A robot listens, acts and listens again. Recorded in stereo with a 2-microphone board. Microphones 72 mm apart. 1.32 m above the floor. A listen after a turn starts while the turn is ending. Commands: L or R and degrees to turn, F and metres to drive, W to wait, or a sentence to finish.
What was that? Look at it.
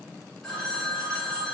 L30
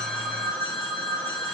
L145
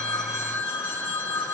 L25
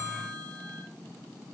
L10
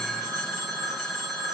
Facing the phone ringing, 1 to 2 m away.